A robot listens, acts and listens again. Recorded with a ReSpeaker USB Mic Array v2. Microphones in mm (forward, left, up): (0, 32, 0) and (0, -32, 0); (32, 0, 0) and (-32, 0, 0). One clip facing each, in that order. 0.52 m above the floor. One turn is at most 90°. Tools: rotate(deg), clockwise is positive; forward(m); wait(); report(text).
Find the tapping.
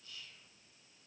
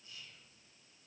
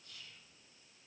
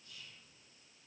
wait()
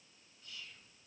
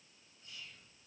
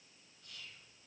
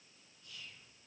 wait()
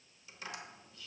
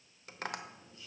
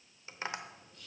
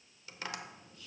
rotate(60)
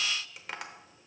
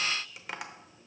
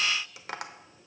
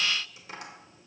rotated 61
report("Facing the tapping, under 1 m away.")